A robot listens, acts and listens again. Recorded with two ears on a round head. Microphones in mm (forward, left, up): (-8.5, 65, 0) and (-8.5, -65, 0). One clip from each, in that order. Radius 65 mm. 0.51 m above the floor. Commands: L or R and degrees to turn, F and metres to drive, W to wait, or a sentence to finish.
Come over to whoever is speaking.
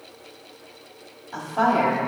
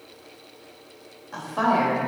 R15
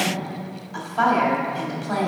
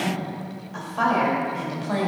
F1.0
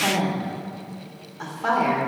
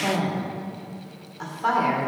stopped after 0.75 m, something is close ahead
I am next to the woman speaking.